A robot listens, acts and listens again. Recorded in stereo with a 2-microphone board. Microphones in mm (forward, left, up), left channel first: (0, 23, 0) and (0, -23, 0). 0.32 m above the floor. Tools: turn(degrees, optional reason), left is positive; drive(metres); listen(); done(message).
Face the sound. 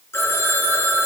turn(degrees=55, reason="The phone ringing: about 55° left or 125° left.")
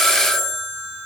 done("Found it: a phone ringing, straight ahead, 2 to 4 m away.")